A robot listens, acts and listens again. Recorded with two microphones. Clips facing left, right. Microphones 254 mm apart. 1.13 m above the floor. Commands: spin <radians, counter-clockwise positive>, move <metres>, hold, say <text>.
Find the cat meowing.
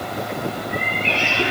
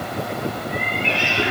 spin -0.52
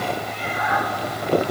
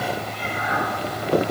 spin -2.53
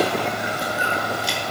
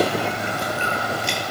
hold
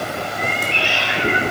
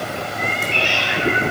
spin -0.87
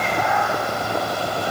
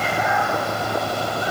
say Found it: a cat meowing, straight ahead, 2 to 4 m away.